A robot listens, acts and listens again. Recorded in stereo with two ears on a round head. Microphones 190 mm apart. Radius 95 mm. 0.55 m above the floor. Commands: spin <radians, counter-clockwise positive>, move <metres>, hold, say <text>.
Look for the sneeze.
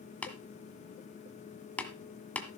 hold
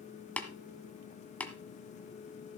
hold
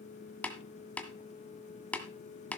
say I can't make out a sneeze to turn to.